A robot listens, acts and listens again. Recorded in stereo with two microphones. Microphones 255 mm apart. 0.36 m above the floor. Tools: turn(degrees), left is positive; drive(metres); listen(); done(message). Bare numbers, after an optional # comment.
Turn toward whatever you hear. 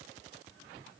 listen()
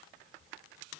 listen()
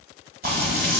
# The frying: about 35° right or 145° right.
turn(-35)
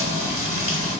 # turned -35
# So it is at 105° right.
turn(-105)
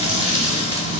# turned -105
# The frying is now 25° right.
turn(-25)
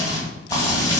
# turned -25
# The frying is now 15° left.
turn(15)
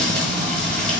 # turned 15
done("Facing the frying, 1 to 2 m away.")